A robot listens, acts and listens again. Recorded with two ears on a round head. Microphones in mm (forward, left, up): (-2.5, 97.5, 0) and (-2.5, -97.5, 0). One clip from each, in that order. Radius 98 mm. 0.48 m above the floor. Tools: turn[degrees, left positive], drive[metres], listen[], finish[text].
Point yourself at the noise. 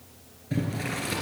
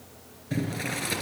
Action: turn[-30]
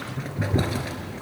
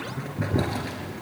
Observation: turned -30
Thought: So it is at 20° left.
Action: turn[20]
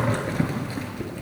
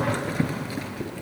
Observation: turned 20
Action: finish[Facing the boiling, 2 to 4 m away.]